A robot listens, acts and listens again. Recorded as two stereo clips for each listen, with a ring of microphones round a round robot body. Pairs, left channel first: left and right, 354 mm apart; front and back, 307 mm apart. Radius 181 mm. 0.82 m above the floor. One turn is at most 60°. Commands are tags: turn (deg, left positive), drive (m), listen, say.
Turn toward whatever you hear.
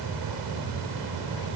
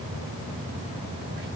<listen/>
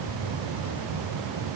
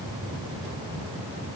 <listen/>
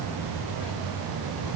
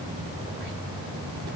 <say>I can't make out anything.</say>